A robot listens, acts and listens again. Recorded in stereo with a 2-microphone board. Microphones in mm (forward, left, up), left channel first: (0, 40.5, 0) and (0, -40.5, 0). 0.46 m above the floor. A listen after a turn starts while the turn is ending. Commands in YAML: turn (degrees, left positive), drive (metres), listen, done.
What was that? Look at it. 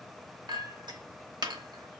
turn: -65
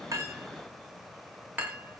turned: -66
turn: -25
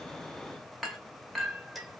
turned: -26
done: "Facing the clink."